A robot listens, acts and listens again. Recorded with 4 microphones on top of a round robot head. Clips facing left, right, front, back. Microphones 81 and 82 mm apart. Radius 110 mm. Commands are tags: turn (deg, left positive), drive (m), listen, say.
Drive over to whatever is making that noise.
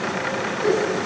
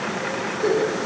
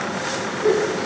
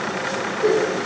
<turn deg="-145"/>
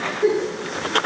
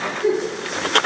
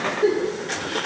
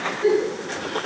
<turn deg="45"/>
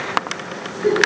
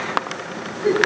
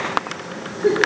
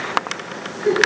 <turn deg="20"/>
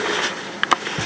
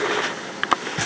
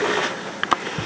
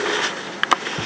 <listen/>
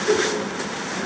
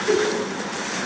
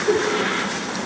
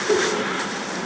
<drive m="1.0"/>
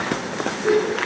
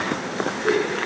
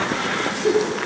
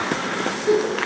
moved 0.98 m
<drive m="1.0"/>
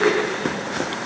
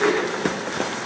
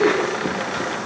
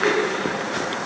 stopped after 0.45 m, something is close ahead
<say>Arrived at the giggle, straight ahead.</say>